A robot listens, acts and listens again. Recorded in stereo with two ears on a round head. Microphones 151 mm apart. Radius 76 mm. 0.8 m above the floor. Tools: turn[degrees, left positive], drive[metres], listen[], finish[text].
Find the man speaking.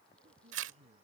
Thought: The man speaking: about 35° right or 145° right.
Action: turn[-35]
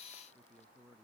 Action: finish[Facing the man speaking.]